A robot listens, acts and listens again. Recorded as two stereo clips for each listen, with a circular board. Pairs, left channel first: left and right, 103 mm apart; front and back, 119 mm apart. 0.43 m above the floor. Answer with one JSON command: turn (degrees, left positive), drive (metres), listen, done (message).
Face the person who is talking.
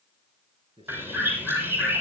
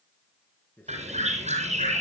{"turn": -75}
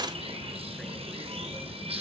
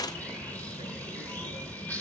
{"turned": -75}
{"listen": true}
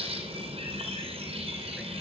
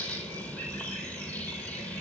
{"listen": true}
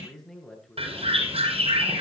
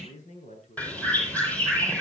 {"done": "Found it: a man speaking, straight ahead."}